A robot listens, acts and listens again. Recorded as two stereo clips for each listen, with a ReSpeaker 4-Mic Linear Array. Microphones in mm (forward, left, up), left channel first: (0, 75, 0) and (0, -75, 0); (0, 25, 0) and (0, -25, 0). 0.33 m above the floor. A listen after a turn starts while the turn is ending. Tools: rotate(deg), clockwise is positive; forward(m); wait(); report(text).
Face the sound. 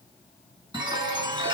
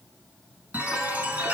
rotate(30)
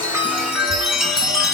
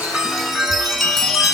report("Found it: a chime, straight ahead.")